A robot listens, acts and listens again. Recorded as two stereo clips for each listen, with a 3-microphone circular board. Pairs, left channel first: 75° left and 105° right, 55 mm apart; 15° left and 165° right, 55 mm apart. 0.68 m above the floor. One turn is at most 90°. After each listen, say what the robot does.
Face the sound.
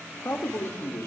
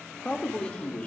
Turn 70° left.
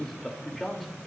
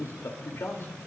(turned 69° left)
Turn 15° right.
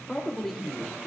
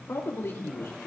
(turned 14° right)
Turn 15° right.
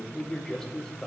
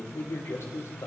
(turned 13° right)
Turn 10° right.
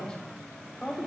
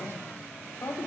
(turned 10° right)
Facing the man speaking, 2 to 4 m away.